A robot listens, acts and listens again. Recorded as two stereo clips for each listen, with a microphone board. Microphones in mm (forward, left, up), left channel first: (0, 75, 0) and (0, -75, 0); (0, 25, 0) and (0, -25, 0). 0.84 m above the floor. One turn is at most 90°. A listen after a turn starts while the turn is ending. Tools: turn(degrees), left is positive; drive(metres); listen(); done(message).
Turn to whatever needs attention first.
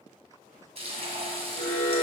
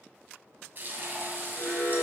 turn(degrees=40)
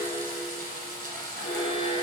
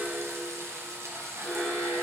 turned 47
turn(degrees=90)
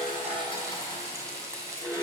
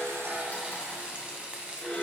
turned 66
turn(degrees=25)
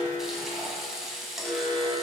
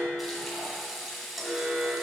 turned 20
done("Facing the alarm, 2 to 4 m away.")